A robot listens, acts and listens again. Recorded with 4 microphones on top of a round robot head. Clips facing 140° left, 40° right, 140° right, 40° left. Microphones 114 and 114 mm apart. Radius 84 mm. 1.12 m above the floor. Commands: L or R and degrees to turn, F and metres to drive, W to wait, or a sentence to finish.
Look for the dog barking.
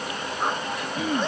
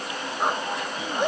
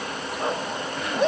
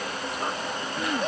R120
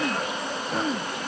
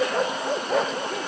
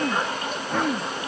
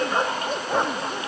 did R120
R30
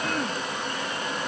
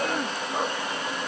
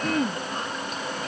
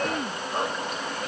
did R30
Found it: a dog barking, straight ahead.